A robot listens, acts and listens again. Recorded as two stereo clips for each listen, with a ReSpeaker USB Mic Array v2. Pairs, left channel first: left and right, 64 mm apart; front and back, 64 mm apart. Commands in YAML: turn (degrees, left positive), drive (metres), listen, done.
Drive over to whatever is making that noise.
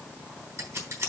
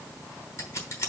turn: -45
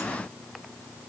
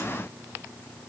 listen: true
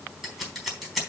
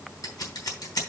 drive: 1.0
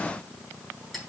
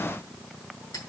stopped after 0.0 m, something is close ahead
done: "Blocked. The scissors is further on, straight ahead."